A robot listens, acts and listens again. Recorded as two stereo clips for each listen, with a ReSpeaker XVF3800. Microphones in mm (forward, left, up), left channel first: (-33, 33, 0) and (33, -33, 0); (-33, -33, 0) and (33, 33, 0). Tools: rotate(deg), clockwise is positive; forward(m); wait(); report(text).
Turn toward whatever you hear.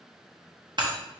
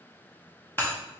rotate(70)
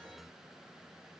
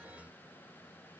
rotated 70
report("Facing where the breaking glass came from. I can't hear it now.")